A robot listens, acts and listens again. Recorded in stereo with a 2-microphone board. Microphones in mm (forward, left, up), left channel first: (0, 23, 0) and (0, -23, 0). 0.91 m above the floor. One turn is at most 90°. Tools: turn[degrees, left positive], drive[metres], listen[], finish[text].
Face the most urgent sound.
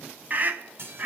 Thought: The scream: about 40° right or 140° right.
Action: turn[-40]
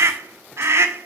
Thought: So it is at 95° right.
Action: turn[-90]
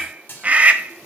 Thought: The scream is now 30° right.
Action: turn[-30]
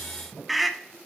Action: finish[Found it: a scream, straight ahead.]